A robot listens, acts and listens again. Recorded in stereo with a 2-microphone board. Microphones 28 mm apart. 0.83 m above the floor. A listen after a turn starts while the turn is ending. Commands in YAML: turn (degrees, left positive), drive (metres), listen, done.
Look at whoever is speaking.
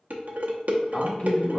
turn: 45
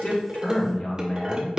turn: 80
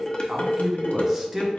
turn: -10
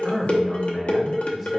done: "Facing the man speaking, 1 to 2 m away."